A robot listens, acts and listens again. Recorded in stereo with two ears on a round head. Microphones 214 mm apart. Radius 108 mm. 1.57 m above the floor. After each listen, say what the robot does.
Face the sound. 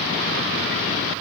Keep listening.
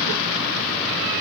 Keep listening.
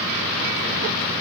I can't make out anything to turn to.